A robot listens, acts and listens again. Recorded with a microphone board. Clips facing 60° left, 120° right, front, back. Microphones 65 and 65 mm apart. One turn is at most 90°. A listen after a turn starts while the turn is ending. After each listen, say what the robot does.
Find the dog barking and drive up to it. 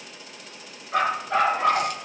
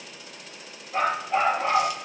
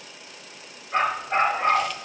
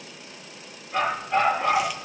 Turn 55° left.
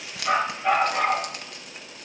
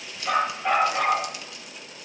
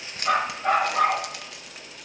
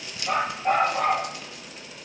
Turn 25° right.
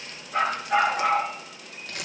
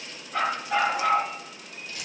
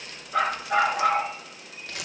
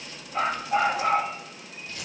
Turn 20° right.
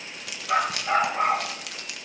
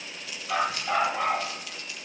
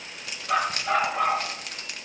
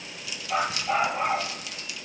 Drive 1.0 m forward.
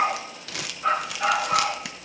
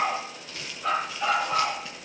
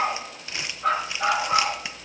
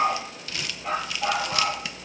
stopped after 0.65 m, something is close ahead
Something is in my way. I am facing the dog barking but have not reached it.